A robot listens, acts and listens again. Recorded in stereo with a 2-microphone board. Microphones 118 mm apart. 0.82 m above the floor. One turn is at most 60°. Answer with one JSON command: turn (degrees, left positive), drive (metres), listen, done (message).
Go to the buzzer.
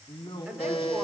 {"turn": 60}
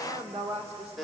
{"drive": 1.0}
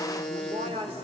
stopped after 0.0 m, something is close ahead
{"done": "Blocked. The buzzer is further on, straight ahead."}